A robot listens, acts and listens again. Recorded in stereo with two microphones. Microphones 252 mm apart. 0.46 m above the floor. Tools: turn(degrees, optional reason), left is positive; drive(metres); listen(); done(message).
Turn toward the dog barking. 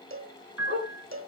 turn(degrees=-45, reason="The dog barking: about 45° right or 135° right.")
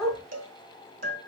done("Found it: a dog barking, straight ahead.")